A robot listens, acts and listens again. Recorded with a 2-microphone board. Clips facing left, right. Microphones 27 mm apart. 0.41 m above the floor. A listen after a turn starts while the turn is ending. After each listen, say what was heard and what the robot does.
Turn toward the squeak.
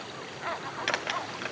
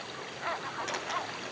The squeak: about 70° left or 110° left. Turn 70° left.
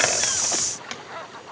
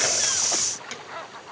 So it is at 25° left. Turn 25° left.
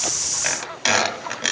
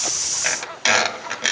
Found it: a squeak, straight ahead.